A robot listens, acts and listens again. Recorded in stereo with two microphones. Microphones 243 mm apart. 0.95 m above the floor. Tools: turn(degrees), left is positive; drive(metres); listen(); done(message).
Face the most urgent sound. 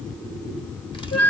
listen()
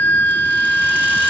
listen()
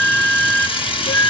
done("I can't make out anything urgent to turn to.")